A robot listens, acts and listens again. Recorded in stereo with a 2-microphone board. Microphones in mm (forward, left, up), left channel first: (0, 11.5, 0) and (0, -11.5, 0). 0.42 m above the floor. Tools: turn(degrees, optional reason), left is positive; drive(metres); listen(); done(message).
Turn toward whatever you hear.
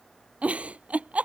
turn(degrees=-90)
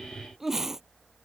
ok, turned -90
turn(degrees=-15, reason="So it is at 15° right.")
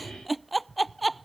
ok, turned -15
done("Found it: a giggle, straight ahead.")